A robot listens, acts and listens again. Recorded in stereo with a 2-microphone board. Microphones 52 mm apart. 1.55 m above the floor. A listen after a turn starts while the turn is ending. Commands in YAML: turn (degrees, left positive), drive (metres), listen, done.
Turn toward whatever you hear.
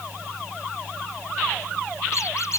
turn: 65
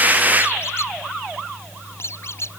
turn: 50
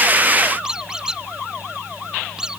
turn: -15
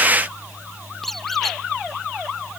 done: "Facing the squeak."